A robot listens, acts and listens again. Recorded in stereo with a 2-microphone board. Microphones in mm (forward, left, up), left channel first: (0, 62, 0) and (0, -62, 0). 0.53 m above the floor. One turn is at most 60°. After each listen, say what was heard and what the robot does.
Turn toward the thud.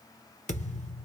The thud: about 75° left or 105° left. Turn 60° left.
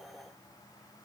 Keep listening.
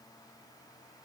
I heard a thud, but can't make it out now. It was about 15° left or 45° left.